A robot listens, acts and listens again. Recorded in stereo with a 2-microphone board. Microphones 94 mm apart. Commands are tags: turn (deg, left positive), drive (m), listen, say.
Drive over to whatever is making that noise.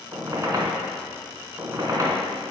<turn deg="-40"/>
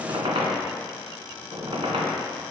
<turn deg="-105"/>
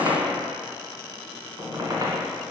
<turn deg="-40"/>
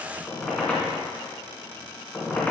<turn deg="15"/>
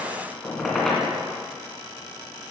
<drive m="1.0"/>
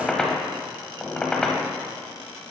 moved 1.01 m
<drive m="1.0"/>
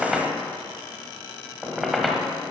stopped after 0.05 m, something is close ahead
<say>Arrived at the squeak, straight ahead.</say>